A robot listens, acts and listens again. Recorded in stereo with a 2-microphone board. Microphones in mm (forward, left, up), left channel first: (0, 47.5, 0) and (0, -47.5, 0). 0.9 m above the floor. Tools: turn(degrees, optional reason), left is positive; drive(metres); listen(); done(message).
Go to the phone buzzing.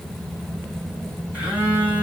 turn(degrees=-30)
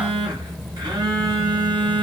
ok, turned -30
turn(degrees=-135, reason="So it is at 135° right.")
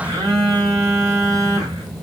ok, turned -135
turn(degrees=-40, reason="The phone buzzing is now 40° right.")
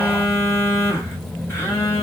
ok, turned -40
turn(degrees=25, reason="The phone buzzing is now 25° left.")
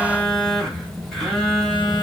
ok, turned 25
drive(metres=1.0)
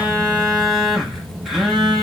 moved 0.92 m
drive(metres=1.0)
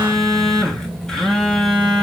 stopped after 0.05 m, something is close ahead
done("I am next to the phone buzzing.")